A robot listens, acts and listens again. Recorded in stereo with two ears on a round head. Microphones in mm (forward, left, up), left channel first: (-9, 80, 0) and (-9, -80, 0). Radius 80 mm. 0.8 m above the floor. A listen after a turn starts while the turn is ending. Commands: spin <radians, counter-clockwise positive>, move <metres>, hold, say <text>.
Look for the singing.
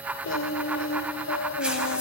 spin 1.57
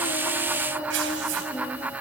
say Found it: singing, straight ahead, 2 to 4 m away.